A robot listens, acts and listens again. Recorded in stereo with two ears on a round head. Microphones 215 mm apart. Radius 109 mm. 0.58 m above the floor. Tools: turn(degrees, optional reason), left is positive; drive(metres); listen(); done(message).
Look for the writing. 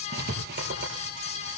turn(degrees=-45, reason="The writing: about 45° right or 135° right.")
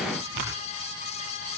turn(degrees=-95, reason="So it is at 95° right.")
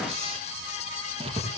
turn(degrees=-25, reason="The writing is now 25° right.")
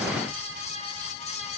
listen()
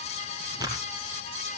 turn(degrees=-15, reason="The writing is now 15° right.")
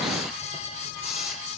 listen()
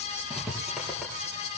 done("Found it: writing, straight ahead.")